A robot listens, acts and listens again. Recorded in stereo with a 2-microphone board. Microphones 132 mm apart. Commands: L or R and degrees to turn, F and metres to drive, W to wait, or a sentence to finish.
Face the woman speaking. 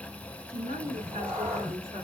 R45
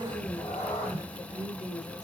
Found it: a woman speaking, straight ahead.